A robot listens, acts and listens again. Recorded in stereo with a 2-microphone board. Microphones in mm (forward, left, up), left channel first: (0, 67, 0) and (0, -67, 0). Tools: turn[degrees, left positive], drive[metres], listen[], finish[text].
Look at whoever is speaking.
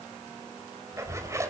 Thought: The child speaking: about 35° right or 145° right.
Action: turn[-35]
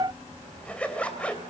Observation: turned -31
Thought: So it is at 115° right.
Action: turn[-115]
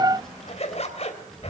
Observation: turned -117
Action: finish[Found it: a child speaking, straight ahead, over 4 m away.]